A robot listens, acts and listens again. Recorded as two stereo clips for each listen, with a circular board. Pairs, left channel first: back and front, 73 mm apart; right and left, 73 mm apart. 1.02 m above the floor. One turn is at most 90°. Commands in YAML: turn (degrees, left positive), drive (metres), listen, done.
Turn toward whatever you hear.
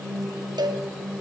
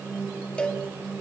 turn: -15
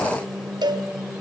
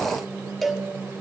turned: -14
done: "Found it: a cowbell, straight ahead."